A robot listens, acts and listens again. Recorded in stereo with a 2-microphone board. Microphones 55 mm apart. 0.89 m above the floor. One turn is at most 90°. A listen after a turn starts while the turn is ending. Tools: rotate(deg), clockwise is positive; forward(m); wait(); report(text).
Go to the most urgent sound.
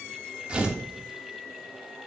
wait()
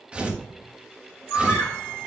rotate(-45)
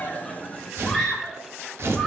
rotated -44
forward(1.0)
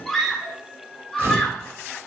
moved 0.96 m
forward(1.0)
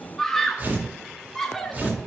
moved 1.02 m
rotate(-10)
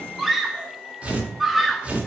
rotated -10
forward(1.0)
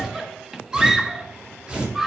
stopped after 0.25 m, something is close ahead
report("Arrived at the scream, straight ahead.")